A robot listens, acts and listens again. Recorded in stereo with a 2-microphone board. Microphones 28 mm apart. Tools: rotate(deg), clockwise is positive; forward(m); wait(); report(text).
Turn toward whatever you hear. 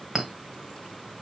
rotate(30)
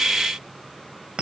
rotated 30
rotate(140)
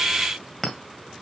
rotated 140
report("Found it: a clink, straight ahead, 1 to 2 m away.")